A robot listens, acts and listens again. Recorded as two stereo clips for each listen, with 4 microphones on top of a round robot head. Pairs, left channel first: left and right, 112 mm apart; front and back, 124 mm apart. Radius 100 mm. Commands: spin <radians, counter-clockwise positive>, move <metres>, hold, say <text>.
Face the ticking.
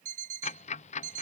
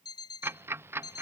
spin 1.83
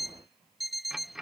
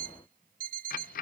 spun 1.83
say Facing the ticking.